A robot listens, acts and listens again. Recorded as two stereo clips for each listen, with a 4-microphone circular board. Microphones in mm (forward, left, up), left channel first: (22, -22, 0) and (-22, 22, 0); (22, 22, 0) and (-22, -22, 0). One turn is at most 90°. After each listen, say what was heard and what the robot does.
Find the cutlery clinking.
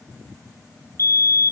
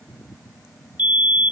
Keep listening.
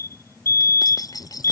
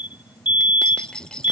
The cutlery clinking: 30° right. Turn 30° right.
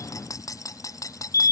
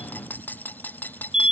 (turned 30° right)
The cutlery clinking is now 15° right. Turn 15° right.
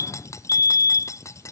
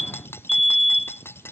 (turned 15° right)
Facing the cutlery clinking.